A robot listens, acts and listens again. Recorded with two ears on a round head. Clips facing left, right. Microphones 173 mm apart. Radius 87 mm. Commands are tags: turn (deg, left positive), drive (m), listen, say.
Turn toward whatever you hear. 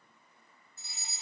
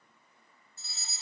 <turn deg="15"/>
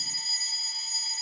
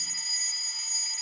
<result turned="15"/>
<turn deg="150"/>
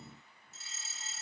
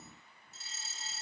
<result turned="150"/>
<turn deg="-30"/>
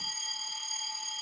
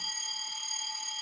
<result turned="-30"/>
<say>Found it: a fire alarm, straight ahead, 2 to 4 m away.</say>